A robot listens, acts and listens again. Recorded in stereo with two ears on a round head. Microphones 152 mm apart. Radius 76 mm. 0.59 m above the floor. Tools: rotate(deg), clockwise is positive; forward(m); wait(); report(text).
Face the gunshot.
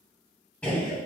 rotate(-30)
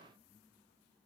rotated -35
wait()
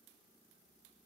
report("I heard a gunshot, but can't make it out now. It was about 25° right or 135° left.")